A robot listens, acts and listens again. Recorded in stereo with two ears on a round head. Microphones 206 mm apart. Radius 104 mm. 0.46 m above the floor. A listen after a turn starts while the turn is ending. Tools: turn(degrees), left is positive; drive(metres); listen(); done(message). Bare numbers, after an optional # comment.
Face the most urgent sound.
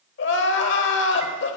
# The crying: about 55° left or 125° left.
turn(55)
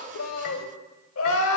# So it is at 65° left.
turn(65)
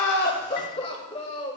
# The crying is now 25° left.
turn(25)
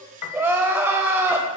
# The crying is now 10° right.
turn(-10)
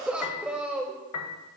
done("Found it: crying, straight ahead.")